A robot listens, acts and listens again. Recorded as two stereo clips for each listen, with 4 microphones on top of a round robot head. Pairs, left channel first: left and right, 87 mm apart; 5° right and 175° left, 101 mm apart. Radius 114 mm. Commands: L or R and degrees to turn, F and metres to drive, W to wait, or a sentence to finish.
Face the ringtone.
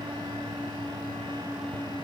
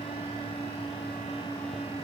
W
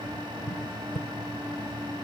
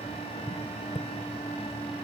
W
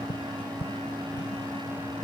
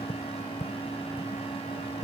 I can't make out a ringtone to turn to.